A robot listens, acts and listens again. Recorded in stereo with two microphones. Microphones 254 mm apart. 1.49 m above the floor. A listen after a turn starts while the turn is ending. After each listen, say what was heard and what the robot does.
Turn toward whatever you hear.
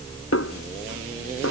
The snare drum: about 65° left or 115° left. Turn 65° left.
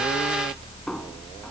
Keep listening.
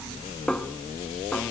Facing the snare drum.